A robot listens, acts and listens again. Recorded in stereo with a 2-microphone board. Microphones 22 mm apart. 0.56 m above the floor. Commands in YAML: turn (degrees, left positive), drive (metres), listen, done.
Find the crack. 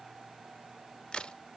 turn: 50
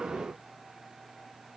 listen: true
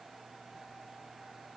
done: "I heard a crack, but can't make it out now. It was about straight ahead or 80° left."